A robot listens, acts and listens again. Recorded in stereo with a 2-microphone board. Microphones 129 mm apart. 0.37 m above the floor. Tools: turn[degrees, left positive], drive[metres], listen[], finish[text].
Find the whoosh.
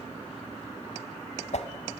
Thought: The whoosh: about 60° left or 120° left.
Action: turn[60]
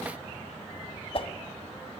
Thought: So it is at 50° left.
Action: turn[50]
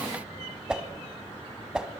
Action: finish[Found it: a whoosh, straight ahead, 1 to 2 m away.]